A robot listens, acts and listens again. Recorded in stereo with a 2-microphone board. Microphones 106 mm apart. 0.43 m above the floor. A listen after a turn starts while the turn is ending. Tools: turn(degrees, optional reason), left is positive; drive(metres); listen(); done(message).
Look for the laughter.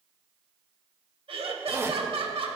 turn(degrees=-60, reason="The laughter: about 60° right or 120° right.")
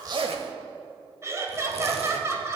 turn(degrees=-30, reason="So it is at 30° right.")
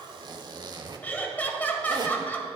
turn(degrees=15, reason="The laughter is now 15° left.")
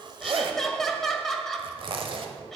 done("Facing the laughter.")